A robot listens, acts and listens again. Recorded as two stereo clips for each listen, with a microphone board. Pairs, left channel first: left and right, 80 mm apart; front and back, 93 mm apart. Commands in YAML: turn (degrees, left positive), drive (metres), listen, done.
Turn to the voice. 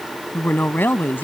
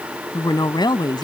turn: 25
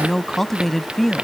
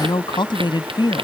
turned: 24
done: "Found it: a woman speaking, straight ahead."